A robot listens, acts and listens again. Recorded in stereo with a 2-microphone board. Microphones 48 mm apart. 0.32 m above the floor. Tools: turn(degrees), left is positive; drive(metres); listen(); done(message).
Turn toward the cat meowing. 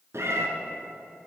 turn(degrees=-70)
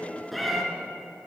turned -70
done("Found it: a cat meowing, straight ahead.")